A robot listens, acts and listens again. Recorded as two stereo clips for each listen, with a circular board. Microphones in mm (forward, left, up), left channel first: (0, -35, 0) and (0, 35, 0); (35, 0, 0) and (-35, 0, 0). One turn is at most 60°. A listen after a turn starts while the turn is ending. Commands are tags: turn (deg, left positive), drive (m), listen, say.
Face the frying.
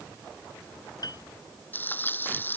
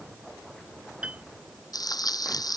<turn deg="-30"/>
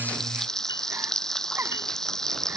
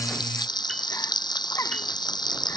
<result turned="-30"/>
<turn deg="-10"/>
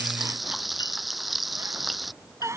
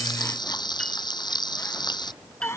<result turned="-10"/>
<say>Facing the frying.</say>